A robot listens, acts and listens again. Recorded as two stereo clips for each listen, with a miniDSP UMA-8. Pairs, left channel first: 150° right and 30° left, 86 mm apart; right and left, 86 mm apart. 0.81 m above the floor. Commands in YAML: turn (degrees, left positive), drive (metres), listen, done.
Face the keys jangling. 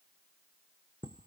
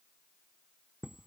listen: true
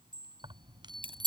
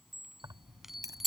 turn: 40
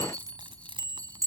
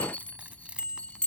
turn: 10
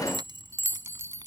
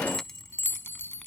turn: -10
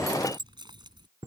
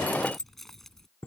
done: "Found it: keys jangling, straight ahead."